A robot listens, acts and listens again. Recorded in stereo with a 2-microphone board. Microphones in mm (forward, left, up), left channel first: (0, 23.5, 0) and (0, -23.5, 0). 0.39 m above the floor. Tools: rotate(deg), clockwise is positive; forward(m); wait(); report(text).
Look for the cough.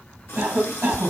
rotate(65)
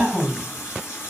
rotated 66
rotate(15)
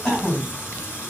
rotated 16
report("Facing the cough.")